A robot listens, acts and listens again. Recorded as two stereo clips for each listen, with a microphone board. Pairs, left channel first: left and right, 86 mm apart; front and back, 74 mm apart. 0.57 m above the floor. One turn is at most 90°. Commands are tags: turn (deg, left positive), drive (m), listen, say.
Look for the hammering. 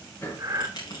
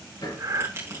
<turn deg="30"/>
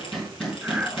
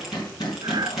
<say>Found it: hammering, straight ahead.</say>